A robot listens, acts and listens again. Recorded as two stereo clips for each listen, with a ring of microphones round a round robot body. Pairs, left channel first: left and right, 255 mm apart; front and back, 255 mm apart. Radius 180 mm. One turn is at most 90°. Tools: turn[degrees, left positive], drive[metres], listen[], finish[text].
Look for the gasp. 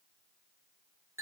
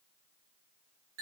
Action: listen[]
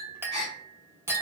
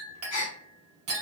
Thought: The gasp: 10° left.
Action: turn[10]
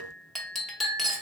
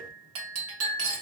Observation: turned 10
Action: finish[I heard a gasp from this way, but can't make it out now.]